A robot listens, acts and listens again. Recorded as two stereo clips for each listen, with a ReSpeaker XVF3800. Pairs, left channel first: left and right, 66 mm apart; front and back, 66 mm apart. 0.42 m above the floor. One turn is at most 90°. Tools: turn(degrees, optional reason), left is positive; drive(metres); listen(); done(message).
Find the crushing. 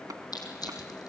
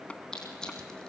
turn(degrees=80, reason="The crushing: 80° left.")
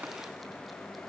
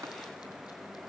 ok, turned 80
listen()
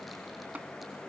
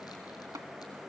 listen()
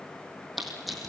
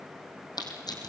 done("Found it: crushing, straight ahead, over 4 m away.")